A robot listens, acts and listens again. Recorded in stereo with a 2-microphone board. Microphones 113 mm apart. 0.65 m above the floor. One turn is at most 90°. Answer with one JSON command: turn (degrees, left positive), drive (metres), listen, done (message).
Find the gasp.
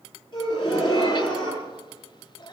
{"turn": 40}
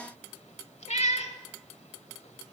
{"listen": true}
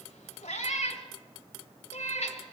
{"done": "I heard a gasp, but can't make it out now. It was about straight ahead or 100° left."}